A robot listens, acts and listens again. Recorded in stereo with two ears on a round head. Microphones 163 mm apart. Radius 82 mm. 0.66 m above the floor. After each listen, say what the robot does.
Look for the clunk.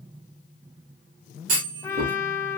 Turn 50° right.
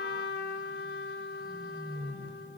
Keep listening.
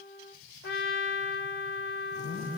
I heard a clunk, but can't make it out now. It was about straight ahead or 80° right.